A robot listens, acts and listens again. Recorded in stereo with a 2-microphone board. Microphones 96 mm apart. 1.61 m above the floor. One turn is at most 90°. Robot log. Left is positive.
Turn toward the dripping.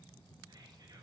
cmd idle
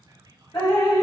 note: The dripping: about 40° left or 140° left.
cmd yaw +40
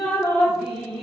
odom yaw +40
end: Facing the dripping, 1 to 2 m away.